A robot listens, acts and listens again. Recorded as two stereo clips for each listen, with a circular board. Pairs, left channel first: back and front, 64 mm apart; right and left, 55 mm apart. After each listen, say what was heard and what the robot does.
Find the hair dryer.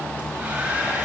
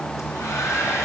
The hair dryer: 70° right. Turn 70° right.
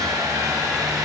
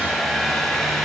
Found it: a hair dryer, straight ahead.